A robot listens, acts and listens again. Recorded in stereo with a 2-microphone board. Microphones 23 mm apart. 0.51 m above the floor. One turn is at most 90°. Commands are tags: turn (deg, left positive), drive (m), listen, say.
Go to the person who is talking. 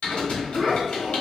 <turn deg="-20"/>
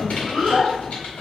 <turn deg="-90"/>
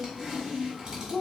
<turn deg="-20"/>
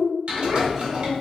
<drive m="1.0"/>
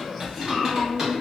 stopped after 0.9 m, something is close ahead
<turn deg="10"/>
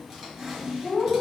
<say>Arrived at the child speaking, straight ahead.</say>